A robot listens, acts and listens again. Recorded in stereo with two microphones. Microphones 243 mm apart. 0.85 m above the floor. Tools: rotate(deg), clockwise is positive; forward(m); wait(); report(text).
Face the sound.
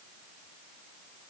wait()
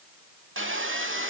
rotate(55)
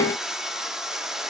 report("Found it: sawing, straight ahead.")